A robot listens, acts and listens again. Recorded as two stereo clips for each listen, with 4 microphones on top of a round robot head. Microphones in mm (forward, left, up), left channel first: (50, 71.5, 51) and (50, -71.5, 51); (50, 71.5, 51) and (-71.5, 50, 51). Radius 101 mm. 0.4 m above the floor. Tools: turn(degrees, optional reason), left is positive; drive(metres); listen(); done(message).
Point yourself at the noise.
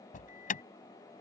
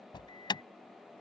turn(degrees=60, reason="The alarm: 60° left.")
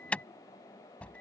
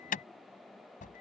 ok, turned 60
turn(degrees=10, reason="The alarm is now 10° left.")
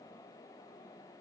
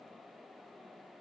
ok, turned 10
listen()
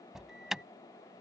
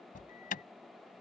done("Facing the alarm.")